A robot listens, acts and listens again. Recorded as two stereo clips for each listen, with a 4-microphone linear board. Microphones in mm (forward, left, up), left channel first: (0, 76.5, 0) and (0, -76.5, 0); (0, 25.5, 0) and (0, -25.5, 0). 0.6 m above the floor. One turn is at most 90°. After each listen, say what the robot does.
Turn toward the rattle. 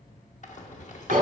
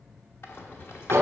Turn 55° left.
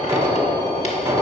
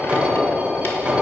Keep listening.
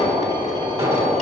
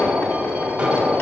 Keep listening.
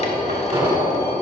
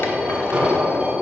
I heard a rattle, but can't make it out now. It was about straight ahead or 70° left.